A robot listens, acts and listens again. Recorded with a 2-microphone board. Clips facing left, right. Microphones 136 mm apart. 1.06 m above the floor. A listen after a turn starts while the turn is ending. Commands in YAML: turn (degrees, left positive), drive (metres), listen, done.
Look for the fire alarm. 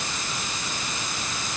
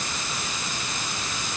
listen: true
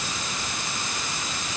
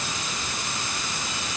listen: true
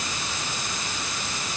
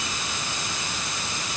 done: "I can't make out a fire alarm."